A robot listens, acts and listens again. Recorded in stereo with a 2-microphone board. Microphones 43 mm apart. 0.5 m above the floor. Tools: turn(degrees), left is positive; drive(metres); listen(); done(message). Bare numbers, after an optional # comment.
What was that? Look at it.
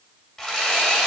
# The sawing: about 15° left or 165° left.
turn(15)
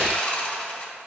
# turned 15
# So it is at 150° left.
turn(150)
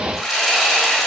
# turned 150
done("Facing the sawing.")